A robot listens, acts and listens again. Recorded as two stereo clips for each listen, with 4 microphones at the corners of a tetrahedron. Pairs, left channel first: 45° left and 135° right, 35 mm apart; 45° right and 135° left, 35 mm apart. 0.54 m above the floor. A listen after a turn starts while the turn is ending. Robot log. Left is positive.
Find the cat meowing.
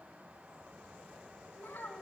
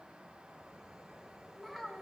cmd idle
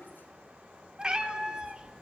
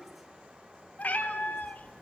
note: The cat meowing: 80° right.
cmd yaw -80
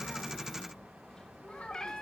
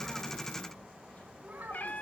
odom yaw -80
note: The cat meowing is now 30° right.
cmd yaw -30
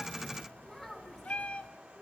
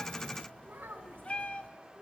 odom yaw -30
end: Facing the cat meowing.